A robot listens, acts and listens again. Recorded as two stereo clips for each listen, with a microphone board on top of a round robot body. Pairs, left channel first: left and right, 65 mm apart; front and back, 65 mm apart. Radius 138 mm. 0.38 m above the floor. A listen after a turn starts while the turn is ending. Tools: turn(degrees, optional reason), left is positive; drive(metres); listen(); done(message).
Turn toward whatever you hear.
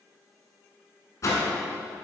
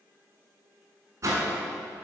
turn(degrees=135, reason="The whoosh: 135° left.")
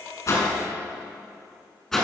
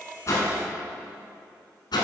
done("Facing the whoosh, 1 to 2 m away.")